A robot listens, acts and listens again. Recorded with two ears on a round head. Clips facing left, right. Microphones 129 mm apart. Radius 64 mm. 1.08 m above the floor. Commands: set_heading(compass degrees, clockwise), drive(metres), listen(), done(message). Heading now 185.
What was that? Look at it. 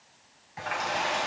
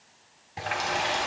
set_heading(225)
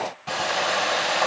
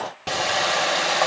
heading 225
set_heading(325)
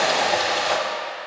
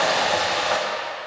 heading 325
set_heading(305)
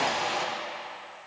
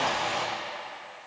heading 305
done("Found it: a running tap, straight ahead.")